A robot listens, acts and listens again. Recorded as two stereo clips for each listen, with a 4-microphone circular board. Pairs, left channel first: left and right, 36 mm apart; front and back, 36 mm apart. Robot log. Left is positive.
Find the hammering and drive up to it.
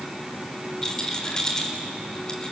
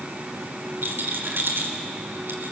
cmd idle
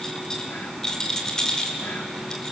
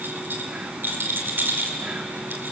cmd idle
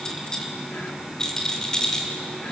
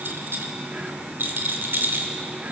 end: I can't make out hammering, only a rattle.